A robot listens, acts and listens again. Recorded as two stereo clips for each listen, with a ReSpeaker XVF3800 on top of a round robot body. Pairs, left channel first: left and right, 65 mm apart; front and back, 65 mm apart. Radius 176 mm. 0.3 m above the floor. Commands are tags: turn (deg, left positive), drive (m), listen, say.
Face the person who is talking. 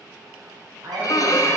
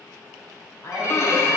<turn deg="-55"/>
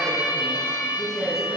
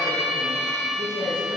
<say>Facing the woman speaking.</say>